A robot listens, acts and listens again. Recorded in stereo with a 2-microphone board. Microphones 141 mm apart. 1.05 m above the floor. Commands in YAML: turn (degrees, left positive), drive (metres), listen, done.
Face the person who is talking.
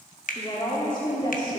turn: 35
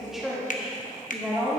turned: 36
done: "Facing the woman speaking."